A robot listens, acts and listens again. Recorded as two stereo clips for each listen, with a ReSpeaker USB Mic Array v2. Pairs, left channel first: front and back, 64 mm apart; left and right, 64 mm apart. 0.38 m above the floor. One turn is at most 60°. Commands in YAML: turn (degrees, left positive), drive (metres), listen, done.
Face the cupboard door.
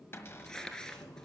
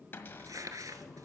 turn: 45
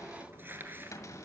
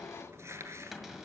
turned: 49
done: "Facing the cupboard door."